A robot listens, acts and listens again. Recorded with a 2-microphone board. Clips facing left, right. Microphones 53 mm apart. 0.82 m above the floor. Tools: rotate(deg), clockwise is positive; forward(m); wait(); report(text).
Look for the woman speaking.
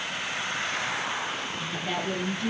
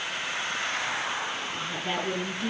rotate(25)
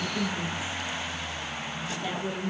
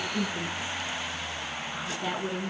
rotate(130)
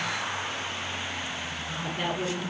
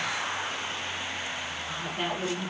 rotate(10)
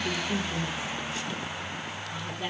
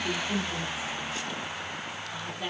report("Found it: a woman speaking, straight ahead, over 4 m away.")